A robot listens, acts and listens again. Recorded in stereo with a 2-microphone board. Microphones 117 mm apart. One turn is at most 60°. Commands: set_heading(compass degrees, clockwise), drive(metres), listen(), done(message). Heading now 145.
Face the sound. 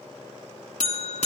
set_heading(85)
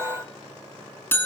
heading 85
set_heading(65)
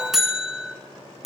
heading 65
done("Facing the buzzer.")